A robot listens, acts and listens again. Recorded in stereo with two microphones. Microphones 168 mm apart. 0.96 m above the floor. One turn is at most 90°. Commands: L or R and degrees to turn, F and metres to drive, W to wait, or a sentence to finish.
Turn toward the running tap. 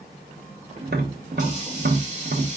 R45
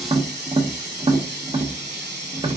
R90
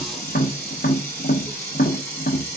L15
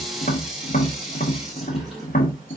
Facing the running tap, 1 to 2 m away.